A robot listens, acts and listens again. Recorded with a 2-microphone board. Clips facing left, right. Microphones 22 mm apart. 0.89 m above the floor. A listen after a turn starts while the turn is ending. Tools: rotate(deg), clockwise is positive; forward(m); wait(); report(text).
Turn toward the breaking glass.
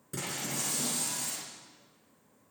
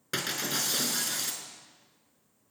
rotate(65)
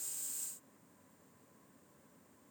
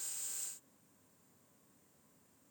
wait()
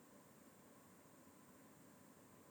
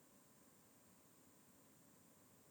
report("I heard breaking glass, but can't make it out now. It was about straight ahead or 50° right.")